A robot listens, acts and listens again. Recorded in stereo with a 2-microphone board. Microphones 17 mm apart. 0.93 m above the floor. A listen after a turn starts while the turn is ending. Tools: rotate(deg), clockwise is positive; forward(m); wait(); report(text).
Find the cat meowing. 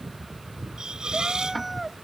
rotate(30)
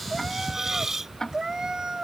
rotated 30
rotate(145)
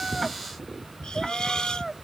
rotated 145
report("Facing the cat meowing.")